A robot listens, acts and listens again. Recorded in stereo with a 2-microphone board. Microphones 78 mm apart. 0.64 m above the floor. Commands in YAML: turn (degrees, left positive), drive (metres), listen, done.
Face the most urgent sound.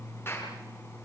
listen: true
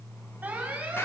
turn: -20
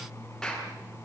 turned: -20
listen: true
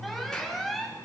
done: "Facing the alarm."